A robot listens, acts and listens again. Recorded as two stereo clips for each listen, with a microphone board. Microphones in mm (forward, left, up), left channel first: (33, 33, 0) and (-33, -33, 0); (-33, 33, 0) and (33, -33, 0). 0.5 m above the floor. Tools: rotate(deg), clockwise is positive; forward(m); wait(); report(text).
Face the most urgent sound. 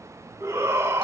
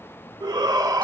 rotate(80)
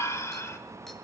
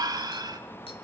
rotate(10)
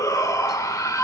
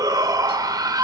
report("Facing the shout.")